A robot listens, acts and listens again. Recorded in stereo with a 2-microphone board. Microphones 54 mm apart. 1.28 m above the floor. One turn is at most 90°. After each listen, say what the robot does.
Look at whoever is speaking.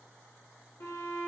Keep listening.
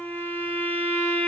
Keep listening.
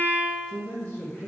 Turn 50° left.
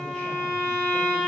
Keep listening.
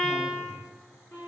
Keep listening.
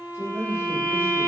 Turn 55° left.
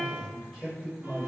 Facing the man speaking, 1 to 2 m away.